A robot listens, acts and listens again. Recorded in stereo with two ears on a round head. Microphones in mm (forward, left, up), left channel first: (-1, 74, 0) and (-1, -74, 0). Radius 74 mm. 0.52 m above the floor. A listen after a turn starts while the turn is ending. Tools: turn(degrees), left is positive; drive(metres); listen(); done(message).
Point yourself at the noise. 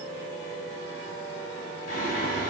turn(degrees=50)
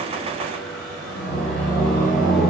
done("Found it: singing, straight ahead, 2 to 4 m away.")